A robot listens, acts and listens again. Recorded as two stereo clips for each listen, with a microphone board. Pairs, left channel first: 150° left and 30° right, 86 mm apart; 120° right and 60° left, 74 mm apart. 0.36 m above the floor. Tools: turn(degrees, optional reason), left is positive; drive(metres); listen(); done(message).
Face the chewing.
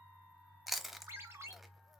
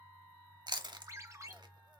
turn(degrees=60, reason="The chewing: 60° left.")
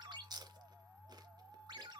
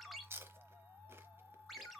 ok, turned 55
done("Facing the chewing.")